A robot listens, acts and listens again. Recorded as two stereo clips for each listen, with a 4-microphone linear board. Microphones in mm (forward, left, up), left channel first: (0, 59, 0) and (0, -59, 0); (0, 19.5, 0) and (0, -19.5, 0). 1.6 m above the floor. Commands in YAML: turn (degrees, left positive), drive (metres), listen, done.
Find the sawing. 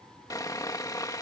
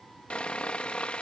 turn: 30
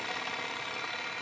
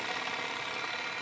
done: "Found it: sawing, straight ahead."